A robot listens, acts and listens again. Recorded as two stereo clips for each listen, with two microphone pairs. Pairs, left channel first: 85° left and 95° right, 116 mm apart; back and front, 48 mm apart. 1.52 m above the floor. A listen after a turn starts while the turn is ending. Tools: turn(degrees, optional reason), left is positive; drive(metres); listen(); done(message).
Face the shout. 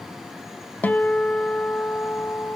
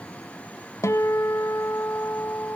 listen()
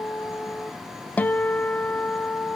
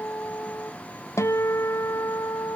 listen()
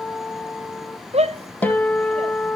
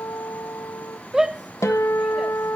turn(degrees=-75, reason="The shout: 75° right.")
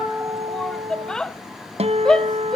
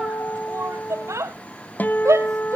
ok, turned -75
done("Facing the shout, under 1 m away.")